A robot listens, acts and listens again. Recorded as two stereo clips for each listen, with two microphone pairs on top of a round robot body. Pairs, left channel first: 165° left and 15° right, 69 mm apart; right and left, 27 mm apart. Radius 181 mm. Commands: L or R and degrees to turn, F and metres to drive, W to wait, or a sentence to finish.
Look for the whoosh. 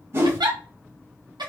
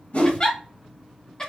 R70
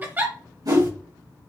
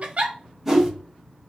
Found it: a whoosh, straight ahead, 2 to 4 m away.